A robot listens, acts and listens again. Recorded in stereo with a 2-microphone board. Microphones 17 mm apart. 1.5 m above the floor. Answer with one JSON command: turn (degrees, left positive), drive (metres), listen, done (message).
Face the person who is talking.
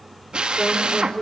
{"turn": 90}
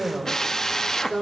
{"turn": 15}
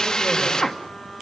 {"listen": true}
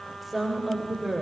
{"turn": 10}
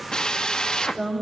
{"done": "Facing the woman speaking, over 4 m away."}